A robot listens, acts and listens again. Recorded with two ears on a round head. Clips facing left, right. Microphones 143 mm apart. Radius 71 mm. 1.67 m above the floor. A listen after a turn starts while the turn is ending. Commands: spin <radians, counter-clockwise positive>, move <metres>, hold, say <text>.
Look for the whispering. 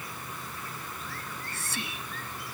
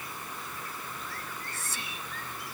spin 0.96
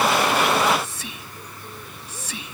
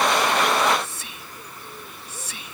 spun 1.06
spin 1.13
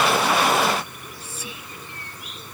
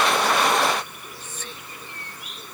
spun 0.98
spin 0.17
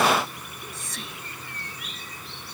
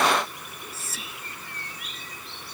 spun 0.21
say Facing the whispering.